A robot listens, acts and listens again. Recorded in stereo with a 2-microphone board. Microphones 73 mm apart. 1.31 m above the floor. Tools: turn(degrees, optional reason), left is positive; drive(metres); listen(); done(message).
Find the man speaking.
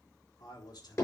turn(degrees=75, reason="The man speaking: about 75° left or 105° left.")
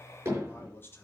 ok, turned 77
turn(degrees=35, reason="So it is at 35° left.")
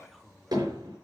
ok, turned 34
done("Facing the man speaking.")